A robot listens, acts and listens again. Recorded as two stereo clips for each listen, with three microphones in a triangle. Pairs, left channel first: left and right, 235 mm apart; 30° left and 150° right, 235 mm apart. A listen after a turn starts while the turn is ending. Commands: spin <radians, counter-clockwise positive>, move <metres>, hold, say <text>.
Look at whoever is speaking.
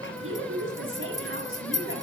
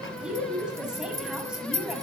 spin -1.13
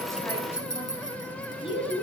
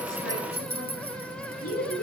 spin 0.44
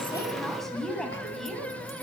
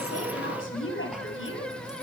say Found it: a woman speaking, straight ahead.